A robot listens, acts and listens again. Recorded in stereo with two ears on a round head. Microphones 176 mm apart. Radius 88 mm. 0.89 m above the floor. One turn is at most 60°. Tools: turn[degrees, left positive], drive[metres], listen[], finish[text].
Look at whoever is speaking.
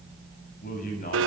Thought: The man speaking: about 45° left or 135° left.
Action: turn[45]
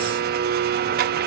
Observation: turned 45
Action: listen[]
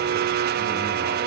Action: listen[]
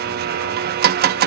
Action: finish[I heard a man speaking, but can't make it out now. It was about straight ahead or 90° left.]